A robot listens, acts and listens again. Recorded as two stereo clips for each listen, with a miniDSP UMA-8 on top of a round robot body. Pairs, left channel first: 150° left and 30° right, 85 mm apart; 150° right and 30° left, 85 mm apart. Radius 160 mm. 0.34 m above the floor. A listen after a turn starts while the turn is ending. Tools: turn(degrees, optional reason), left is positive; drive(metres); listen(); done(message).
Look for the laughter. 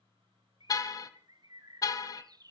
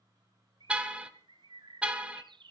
listen()
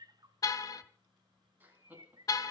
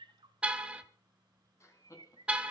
turn(degrees=-100, reason="The laughter: 100° right.")
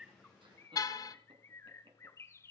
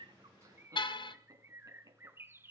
turn(degrees=-20, reason="The laughter is now 20° right.")
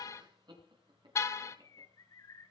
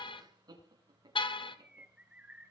turn(degrees=-10, reason="The laughter is now 10° right.")
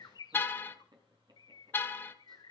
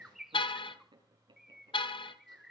done("Found it: laughter, straight ahead.")